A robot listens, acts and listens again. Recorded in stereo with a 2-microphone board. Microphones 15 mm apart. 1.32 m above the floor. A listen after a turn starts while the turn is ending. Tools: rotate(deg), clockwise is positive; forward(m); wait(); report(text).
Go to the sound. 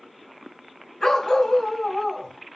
rotate(-45)
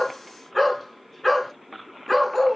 forward(1.0)
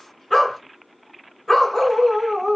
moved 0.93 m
rotate(-10)
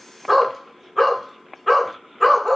forward(1.0)
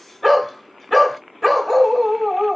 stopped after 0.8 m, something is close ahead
report("Arrived at the dog barking, straight ahead.")